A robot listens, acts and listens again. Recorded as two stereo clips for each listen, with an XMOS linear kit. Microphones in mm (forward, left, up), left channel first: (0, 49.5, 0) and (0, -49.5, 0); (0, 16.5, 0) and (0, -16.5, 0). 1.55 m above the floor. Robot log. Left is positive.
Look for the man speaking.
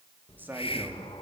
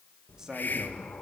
note: The man speaking: about 20° right or 160° right.
cmd yaw -20
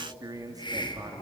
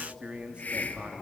note: So it is at 145° right.
cmd yaw -145
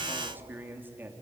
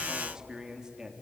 note: The man speaking is now 20° right.
cmd yaw -20
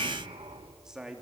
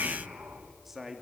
end: Facing the man speaking, 2 to 4 m away.